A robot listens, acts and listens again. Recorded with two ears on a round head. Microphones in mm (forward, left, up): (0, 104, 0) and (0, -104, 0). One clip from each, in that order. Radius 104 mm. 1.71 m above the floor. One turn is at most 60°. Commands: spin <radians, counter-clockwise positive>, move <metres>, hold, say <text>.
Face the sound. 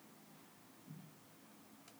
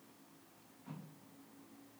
hold
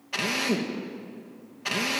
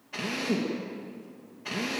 spin 0.70
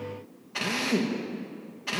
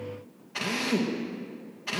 say Facing the drill.